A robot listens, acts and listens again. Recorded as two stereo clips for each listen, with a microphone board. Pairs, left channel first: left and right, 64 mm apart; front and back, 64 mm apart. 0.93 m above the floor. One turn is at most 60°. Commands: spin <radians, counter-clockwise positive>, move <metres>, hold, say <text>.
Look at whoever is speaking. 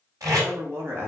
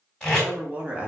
spin -1.05
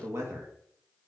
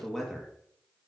spin -1.05
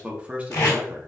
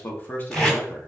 spin -0.79
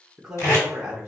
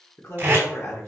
spin -0.35
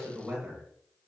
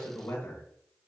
spin -0.26
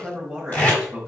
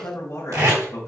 say Found it: a man speaking, straight ahead, 1 to 2 m away.